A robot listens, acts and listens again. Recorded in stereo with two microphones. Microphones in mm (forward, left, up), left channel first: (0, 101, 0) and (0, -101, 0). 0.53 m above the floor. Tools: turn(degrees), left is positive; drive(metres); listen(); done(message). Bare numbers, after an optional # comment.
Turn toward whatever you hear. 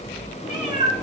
# The cat meowing: about 40° left or 140° left.
turn(40)
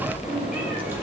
# So it is at 10° right.
turn(-10)
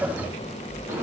# The cat meowing is now 15° right.
turn(-15)
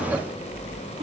listen()
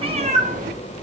# The cat meowing is now 45° right.
turn(-45)
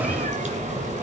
# The cat meowing is now 40° right.
turn(-40)
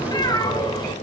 # The cat meowing is now 20° left.
turn(20)
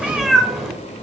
done("Found it: a cat meowing, straight ahead, 1 to 2 m away.")